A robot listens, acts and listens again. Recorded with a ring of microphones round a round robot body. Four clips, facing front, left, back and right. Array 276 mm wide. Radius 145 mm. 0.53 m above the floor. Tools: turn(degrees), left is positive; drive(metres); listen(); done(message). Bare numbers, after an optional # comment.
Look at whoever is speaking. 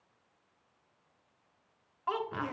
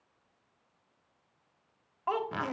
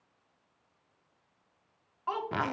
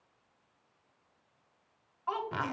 # The child speaking: 75° left.
turn(75)
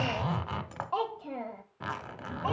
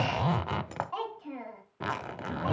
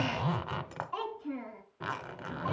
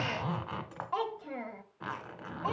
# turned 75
# The child speaking is now 30° right.
turn(-30)
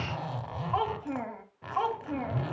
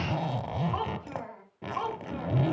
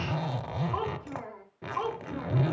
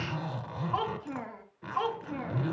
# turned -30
# The child speaking is now 10° right.
turn(-10)
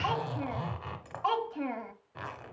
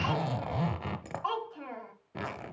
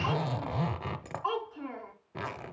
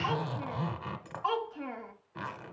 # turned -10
done("Facing the child speaking.")